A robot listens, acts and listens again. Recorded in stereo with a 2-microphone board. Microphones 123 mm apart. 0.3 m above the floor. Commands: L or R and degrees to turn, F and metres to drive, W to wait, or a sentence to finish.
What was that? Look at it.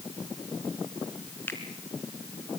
L15
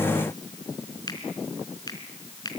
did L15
L150
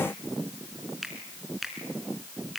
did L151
Facing the finger snap, 2 to 4 m away.